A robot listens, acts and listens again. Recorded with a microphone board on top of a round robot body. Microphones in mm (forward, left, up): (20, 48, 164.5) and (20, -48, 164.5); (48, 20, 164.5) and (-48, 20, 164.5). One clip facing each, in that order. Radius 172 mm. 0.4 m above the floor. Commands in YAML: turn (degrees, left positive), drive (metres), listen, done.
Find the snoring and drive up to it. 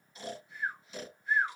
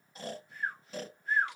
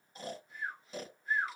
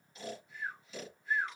turn: -50
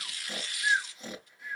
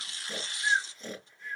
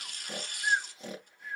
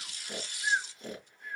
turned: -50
turn: 10
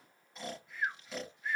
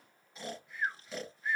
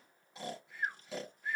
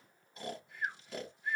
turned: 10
drive: 1.0
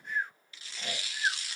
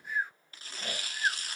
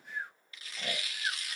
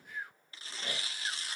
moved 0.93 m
drive: 1.0
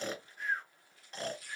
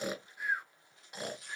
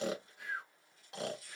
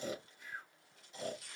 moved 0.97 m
turn: -10
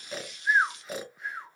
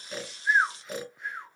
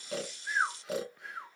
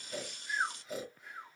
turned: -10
drive: 1.0
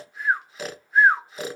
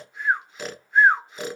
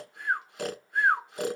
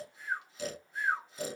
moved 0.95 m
drive: 1.0
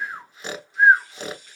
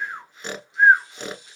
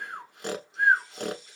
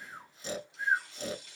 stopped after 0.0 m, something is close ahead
done: "Arrived at the snoring, straight ahead."